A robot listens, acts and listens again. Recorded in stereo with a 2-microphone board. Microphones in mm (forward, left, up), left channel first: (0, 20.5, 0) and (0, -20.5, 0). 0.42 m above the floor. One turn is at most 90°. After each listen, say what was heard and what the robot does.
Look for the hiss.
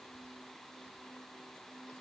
Keep listening.
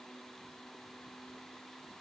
Keep listening.
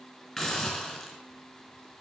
Turn 30° left.
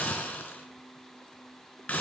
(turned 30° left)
So it is at 145° left. Turn 90° left.
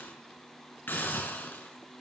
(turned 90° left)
The hiss is now 60° left. Turn 60° left.
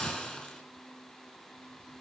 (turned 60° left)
The hiss is now 20° left. Turn 20° left.
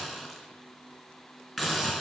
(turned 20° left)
Facing the hiss.